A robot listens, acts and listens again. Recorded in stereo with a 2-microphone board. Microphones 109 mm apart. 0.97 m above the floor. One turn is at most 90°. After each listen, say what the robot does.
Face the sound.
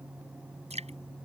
Turn 90° right.
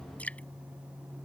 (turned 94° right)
Turn 15° left.
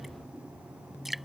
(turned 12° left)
Found it: dripping, straight ahead.